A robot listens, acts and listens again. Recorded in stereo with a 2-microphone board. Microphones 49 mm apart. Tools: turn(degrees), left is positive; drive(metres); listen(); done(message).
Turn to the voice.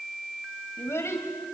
turn(degrees=70)
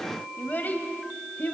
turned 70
turn(degrees=35)
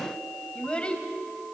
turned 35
turn(degrees=20)
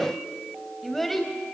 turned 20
done("Found it: a child speaking, straight ahead.")